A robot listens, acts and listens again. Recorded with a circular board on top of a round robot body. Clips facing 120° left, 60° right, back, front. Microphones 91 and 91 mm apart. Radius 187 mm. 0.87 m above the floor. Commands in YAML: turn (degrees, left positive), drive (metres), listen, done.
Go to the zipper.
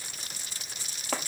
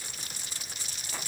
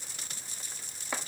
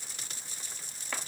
listen: true
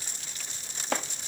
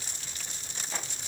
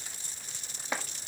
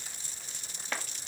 listen: true
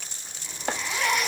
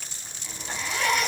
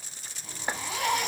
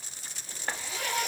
turn: -150
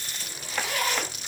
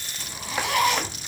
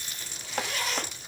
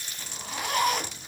turn: -40
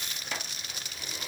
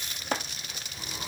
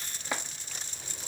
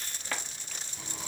listen: true
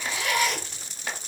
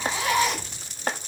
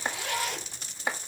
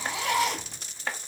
drive: 1.0
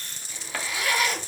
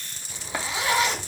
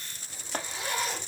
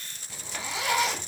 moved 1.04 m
drive: 1.0
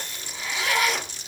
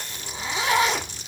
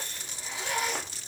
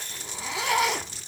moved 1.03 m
drive: 1.0
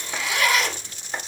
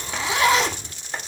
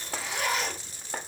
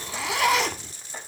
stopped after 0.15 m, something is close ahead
done: "Arrived at the zipper, straight ahead."